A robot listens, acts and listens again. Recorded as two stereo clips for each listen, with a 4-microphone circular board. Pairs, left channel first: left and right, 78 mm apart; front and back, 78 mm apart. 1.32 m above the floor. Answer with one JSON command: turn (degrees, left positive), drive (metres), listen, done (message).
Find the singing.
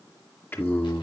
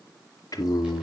{"turn": 35}
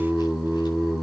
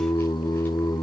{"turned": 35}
{"done": "Found it: singing, straight ahead."}